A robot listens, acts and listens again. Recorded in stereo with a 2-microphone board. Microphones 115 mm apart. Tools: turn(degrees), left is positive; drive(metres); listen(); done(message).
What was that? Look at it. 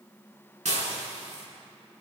turn(degrees=-90)
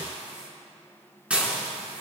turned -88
turn(degrees=-10)
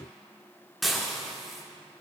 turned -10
done("Facing the dishes clattering, over 4 m away.")